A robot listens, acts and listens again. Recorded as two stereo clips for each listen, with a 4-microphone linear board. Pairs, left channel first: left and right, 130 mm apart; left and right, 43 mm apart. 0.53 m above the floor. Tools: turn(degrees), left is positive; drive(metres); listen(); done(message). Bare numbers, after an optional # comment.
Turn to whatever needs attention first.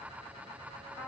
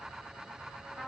listen()
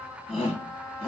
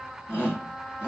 # The shout: about 45° left or 135° left.
turn(45)
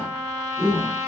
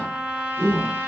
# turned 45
done("Facing the shout.")